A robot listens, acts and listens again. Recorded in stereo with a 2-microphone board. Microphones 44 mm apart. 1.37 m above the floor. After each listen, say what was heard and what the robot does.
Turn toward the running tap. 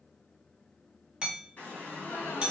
The running tap: about 40° left or 140° left. Turn 40° left.
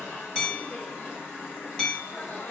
So it is at 95° left. Turn 95° left.
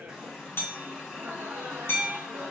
Found it: a running tap, straight ahead.